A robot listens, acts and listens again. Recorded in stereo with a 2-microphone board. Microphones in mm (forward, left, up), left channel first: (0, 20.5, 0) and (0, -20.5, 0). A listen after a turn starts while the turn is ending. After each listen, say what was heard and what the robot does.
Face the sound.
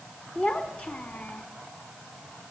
The child speaking: about 35° left or 145° left. Turn 35° left.
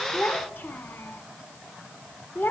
So it is at 115° left. Turn 115° left.
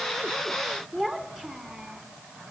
The child speaking is now 15° right. Turn 15° right.
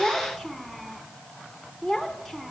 Found it: a child speaking, straight ahead.